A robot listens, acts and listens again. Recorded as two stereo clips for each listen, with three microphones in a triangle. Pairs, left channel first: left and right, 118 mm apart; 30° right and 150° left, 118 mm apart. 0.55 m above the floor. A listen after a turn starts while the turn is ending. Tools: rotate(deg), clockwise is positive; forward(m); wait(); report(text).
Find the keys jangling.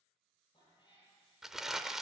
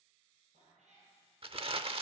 wait()
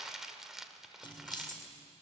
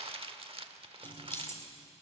rotate(-40)
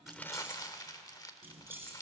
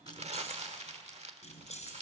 rotate(20)
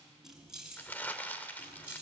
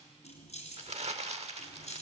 rotate(10)
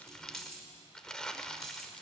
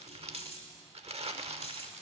report("Found it: keys jangling, straight ahead, over 4 m away.")